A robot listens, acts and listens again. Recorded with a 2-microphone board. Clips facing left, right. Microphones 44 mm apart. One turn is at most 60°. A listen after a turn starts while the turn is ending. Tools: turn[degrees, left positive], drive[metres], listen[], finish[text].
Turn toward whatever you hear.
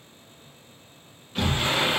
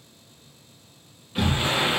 Action: turn[-30]
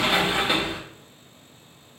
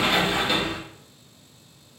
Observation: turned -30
Thought: So it is at 20° left.
Action: turn[20]
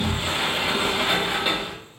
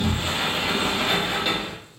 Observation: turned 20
Thought: The sliding door is now 10° left.
Action: turn[10]
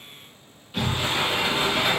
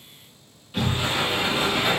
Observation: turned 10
Action: finish[Facing the sliding door, under 1 m away.]